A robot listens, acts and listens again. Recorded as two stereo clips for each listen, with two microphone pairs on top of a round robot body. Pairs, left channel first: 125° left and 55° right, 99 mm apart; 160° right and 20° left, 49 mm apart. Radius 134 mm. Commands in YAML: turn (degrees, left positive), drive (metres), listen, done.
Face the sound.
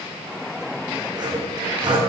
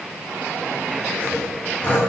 turn: -100
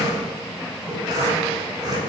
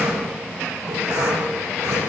done: "Facing the sawing."